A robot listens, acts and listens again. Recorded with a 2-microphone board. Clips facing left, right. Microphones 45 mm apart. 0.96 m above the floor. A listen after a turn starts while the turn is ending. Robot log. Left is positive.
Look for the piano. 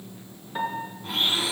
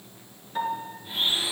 note: The piano: about 15° left or 165° left.
cmd yaw +15
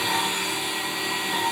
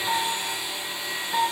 end: Found it: a piano, straight ahead, 2 to 4 m away.